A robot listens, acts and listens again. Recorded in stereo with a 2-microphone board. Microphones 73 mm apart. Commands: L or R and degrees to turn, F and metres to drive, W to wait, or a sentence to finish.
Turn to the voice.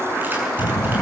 L60
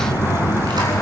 L60
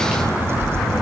Found it: a child speaking, straight ahead.